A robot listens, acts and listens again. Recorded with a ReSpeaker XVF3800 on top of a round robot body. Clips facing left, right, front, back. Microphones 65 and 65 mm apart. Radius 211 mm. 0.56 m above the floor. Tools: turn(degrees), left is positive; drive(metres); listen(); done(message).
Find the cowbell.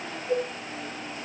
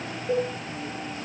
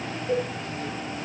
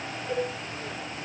turn(degrees=-70)
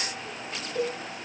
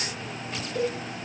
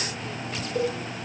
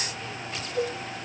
done("Found it: a cowbell, straight ahead, over 4 m away.")